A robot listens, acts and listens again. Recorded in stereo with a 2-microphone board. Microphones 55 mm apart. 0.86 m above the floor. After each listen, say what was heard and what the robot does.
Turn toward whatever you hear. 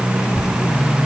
Turn 90° left.
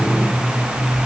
Keep listening.
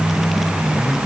Keep listening.
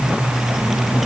I heard a child speaking from this way, but can't make it out now.